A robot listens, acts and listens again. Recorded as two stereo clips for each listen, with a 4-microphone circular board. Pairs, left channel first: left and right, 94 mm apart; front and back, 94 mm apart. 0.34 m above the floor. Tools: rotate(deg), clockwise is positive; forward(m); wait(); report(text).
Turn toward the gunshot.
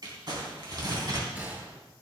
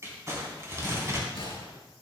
rotate(20)
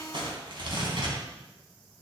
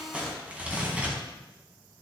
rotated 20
report("Facing where the gunshot came from. I can't hear it now.")